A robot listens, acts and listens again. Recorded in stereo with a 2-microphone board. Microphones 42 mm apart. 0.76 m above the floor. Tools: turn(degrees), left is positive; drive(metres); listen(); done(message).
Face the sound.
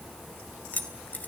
turn(degrees=45)
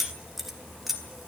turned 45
done("Found it: keys jangling, straight ahead, 2 to 4 m away.")